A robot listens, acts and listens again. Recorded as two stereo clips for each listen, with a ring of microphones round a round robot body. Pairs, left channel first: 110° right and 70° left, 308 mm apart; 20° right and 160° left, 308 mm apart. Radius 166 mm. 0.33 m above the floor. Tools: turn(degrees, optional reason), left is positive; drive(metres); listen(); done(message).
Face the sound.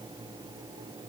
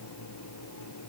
listen()
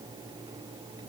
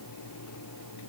listen()
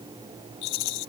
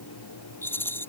turn(degrees=-105, reason="The rattle: 105° right.")
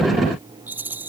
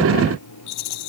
turn(degrees=-15, reason="The rattle is now 15° right.")
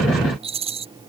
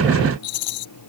done("Found it: a rattle, straight ahead.")